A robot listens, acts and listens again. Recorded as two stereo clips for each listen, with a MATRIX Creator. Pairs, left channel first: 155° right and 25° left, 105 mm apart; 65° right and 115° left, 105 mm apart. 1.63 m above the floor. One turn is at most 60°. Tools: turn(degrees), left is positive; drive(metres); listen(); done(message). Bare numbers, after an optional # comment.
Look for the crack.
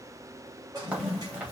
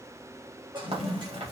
# The crack: 100° left.
turn(60)
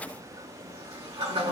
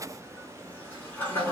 # Nothing new. It was at 40° left.
turn(40)
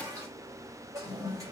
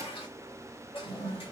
done("Facing where the crack came from. I can't hear it now.")